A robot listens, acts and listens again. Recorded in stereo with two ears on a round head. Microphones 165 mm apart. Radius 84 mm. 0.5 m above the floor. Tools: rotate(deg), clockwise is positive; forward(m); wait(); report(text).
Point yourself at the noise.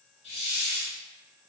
rotate(-30)
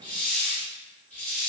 rotate(-10)
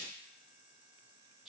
wait()
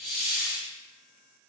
report("Facing the hiss.")